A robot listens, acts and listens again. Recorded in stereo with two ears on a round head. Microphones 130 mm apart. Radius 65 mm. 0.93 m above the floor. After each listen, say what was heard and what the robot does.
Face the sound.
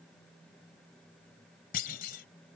The clunk: about 65° left or 115° left. Turn 65° left.
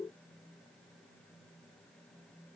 Keep listening.
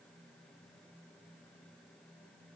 I heard a clunk, but can't make it out now. It was about straight ahead or 50° left.